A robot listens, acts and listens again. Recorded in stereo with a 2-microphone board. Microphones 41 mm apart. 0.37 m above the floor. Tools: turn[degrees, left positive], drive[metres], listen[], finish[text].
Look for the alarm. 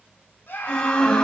Thought: The alarm: about 20° left or 160° left.
Action: turn[20]
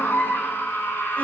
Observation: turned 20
Action: listen[]
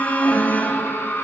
Thought: So it is at 140° left.
Action: turn[140]
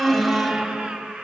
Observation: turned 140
Action: finish[Facing the alarm, 1 to 2 m away.]